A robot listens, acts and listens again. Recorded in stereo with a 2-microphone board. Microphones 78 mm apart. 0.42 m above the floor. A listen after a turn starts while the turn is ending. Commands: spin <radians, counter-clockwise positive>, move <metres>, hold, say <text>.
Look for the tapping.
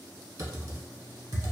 hold
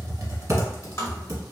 spin 0.70
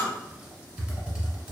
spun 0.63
hold
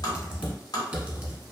spin 1.75
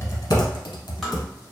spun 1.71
say Found it: tapping, straight ahead.